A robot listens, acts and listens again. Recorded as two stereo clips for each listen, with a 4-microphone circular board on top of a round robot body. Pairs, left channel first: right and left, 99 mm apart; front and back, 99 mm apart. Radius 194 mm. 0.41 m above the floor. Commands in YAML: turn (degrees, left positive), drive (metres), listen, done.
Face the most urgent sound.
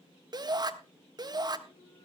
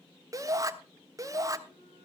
turn: 130
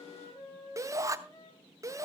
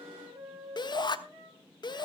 turn: 35
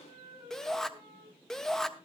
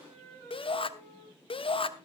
done: "Found it: a shout, straight ahead, 1 to 2 m away."